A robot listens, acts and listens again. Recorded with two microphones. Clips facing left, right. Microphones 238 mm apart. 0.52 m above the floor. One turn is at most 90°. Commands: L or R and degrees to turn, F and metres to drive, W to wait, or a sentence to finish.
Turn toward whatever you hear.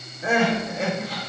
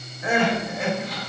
L30
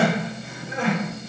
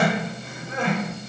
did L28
Found it: crying, straight ahead, 1 to 2 m away.